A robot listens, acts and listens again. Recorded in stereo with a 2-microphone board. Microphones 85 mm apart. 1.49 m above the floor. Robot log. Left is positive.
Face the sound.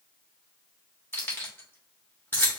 note: The keys jangling: about 25° left or 155° left.
cmd yaw +25
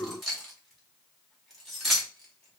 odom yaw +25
end: Found it: keys jangling, straight ahead, 1 to 2 m away.